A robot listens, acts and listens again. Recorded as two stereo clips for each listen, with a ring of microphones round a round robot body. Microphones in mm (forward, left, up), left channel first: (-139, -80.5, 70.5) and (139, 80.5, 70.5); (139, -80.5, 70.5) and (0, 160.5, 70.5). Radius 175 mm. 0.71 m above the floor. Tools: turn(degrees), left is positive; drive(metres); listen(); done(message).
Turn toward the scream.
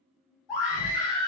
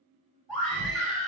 turn(degrees=-150)
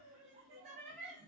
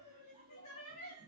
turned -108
turn(degrees=-40)
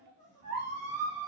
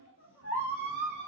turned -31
turn(degrees=-10)
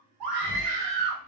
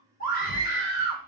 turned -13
done("Facing the scream.")